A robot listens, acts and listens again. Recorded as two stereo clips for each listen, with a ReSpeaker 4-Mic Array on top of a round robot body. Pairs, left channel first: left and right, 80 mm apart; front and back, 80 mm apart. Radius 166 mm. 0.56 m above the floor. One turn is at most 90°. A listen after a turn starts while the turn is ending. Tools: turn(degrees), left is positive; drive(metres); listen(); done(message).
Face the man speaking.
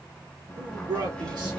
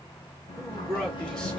turn(degrees=-80)
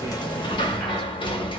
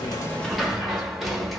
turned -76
listen()
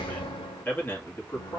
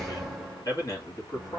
turn(degrees=35)
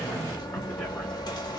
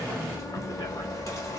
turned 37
listen()
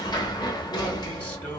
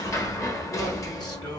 turn(degrees=25)
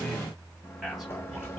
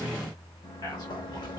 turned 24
done("Found it: a man speaking, straight ahead, 2 to 4 m away.")